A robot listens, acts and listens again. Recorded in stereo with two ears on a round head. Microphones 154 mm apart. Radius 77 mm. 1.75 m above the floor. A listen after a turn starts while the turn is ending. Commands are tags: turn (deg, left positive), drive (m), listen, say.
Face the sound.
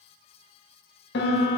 <turn deg="70"/>
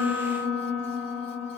<turn deg="25"/>
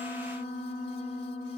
<say>Facing the piano.</say>